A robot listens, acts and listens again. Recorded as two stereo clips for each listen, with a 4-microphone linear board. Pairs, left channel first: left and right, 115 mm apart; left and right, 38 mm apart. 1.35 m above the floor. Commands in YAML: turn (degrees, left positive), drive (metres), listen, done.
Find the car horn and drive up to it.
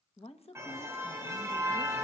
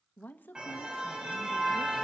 turn: -25
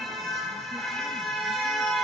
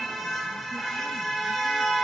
drive: 1.0
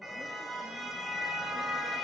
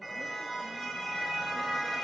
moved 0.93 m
drive: 1.0
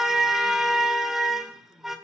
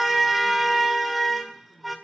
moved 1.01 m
drive: 1.0
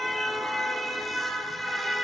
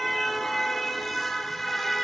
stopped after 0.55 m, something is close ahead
done: "Arrived at the car horn, straight ahead."